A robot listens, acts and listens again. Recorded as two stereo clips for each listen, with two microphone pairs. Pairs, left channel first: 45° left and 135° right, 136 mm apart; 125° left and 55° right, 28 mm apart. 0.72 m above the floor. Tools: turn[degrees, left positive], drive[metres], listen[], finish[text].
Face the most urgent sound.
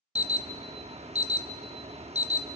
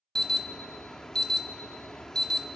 Thought: The alarm: 165° right.
Action: turn[-165]
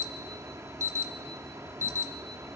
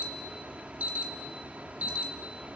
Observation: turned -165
Thought: The alarm is now 70° right.
Action: turn[-70]
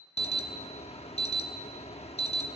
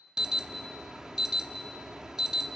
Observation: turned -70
Thought: The alarm is now 10° left.
Action: turn[10]
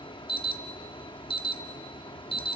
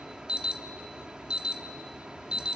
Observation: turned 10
Action: finish[Found it: an alarm, straight ahead.]